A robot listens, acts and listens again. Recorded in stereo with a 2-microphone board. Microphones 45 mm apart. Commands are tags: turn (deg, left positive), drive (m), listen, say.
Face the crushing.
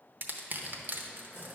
<turn deg="-45"/>
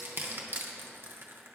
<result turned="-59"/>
<turn deg="-70"/>
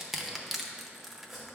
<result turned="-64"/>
<say>Found it: crushing, straight ahead, under 1 m away.</say>